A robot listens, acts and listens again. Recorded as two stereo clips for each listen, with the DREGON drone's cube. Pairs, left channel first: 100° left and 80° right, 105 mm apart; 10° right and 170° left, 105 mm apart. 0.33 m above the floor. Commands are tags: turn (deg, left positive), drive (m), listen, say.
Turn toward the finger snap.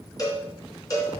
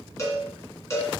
<listen/>
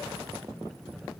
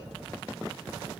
<listen/>
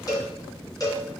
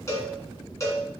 <say>I can't make out a finger snap, only a cowbell.</say>